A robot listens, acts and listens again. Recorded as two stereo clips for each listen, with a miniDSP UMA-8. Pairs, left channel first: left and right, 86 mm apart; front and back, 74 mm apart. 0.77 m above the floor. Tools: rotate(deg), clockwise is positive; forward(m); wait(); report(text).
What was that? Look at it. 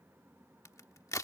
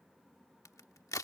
rotate(-40)
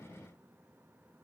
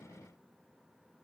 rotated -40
report("Facing where the crack came from. I can't hear it now.")